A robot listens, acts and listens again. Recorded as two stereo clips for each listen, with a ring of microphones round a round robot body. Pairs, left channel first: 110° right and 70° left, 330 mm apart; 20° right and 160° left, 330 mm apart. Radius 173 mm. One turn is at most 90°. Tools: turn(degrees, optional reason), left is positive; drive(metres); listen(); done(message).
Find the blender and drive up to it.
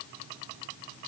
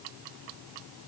listen()
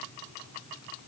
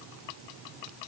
listen()
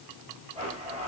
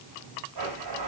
turn(degrees=90, reason="The blender: 140° left.")
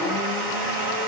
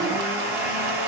turn(degrees=75, reason="The blender is now 75° left.")
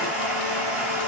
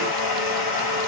turn(degrees=-20, reason="The blender is now 20° right.")
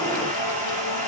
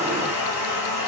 drive(metres=1.0)
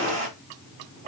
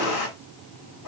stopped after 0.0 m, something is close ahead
done("Something is in my way. I am facing the blender but have not reached it.")